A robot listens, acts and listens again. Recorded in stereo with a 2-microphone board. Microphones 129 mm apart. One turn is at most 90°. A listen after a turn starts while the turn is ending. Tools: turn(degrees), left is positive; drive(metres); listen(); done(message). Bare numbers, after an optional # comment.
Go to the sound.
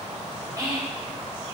# The whispering: about 30° right or 150° right.
turn(-30)
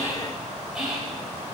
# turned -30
drive(1.0)
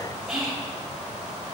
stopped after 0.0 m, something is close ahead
done("Something is in my way. I am facing the whispering but have not reached it.")